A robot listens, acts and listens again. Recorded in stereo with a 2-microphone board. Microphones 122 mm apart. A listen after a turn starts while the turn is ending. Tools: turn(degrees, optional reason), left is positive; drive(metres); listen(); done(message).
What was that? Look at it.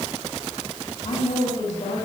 turn(degrees=90)
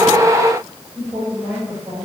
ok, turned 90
turn(degrees=-15, reason="So it is at 15° right.")
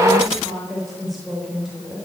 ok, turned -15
done("Facing the woman speaking, over 4 m away.")